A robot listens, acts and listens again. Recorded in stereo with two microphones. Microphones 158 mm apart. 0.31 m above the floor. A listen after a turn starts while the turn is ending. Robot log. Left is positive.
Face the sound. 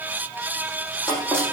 cmd yaw +30
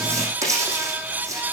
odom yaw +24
note: So it is at 20° right.
cmd yaw -20
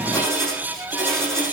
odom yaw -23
end: Facing the writing.